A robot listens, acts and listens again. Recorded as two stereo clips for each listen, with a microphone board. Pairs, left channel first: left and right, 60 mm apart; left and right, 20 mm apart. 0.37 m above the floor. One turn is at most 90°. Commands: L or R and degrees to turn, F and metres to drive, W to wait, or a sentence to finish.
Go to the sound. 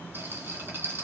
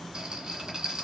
R40
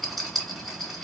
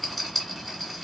F1.0
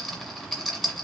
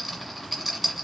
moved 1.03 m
F1.0
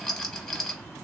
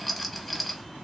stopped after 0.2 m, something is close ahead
Arrived at the rattle, straight ahead.